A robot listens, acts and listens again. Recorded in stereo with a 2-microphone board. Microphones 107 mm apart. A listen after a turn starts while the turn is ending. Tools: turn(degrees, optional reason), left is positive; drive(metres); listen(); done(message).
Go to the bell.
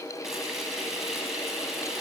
listen()
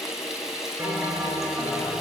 turn(degrees=-25, reason="The bell: about 25° right or 155° right.")
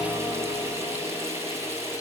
drive(metres=1.0)
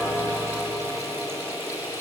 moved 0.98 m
drive(metres=1.0)
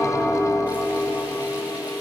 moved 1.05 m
turn(degrees=10, reason="The bell is now 10° left.")
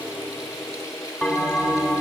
drive(metres=1.0)
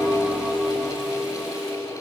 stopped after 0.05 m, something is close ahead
done("Arrived at the bell, straight ahead.")